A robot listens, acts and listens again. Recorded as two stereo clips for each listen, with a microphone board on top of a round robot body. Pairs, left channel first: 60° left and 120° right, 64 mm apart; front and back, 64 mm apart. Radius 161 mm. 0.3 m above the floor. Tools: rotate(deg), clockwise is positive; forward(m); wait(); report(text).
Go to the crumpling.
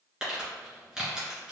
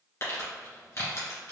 rotate(35)
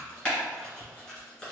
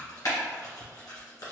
rotate(10)
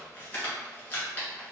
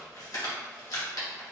forward(1.0)
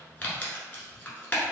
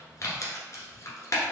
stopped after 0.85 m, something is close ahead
rotate(-10)
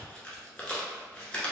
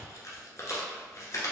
report("I am next to the crumpling.")